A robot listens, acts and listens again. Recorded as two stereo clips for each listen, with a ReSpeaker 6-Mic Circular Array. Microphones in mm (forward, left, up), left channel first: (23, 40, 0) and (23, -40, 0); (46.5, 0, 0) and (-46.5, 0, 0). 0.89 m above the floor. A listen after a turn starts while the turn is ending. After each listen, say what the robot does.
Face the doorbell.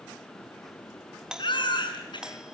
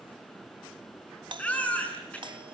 Turn 170° right.
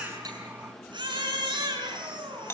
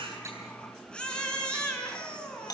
Turn 35° left.
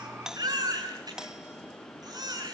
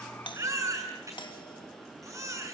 Keep listening.
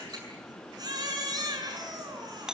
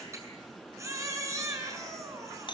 Turn 10° right.
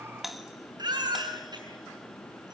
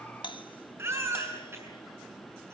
Found it: a doorbell, straight ahead.